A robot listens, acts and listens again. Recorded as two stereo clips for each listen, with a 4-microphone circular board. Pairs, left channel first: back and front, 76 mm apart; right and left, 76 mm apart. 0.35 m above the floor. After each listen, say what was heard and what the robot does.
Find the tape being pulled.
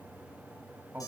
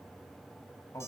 Keep listening.
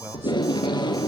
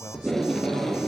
The tape being pulled: 175° right. Turn 175° right.
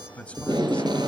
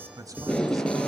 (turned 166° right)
The tape being pulled is now 10° right. Turn 10° right.
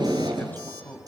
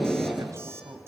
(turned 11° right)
Found it: tape being pulled, straight ahead.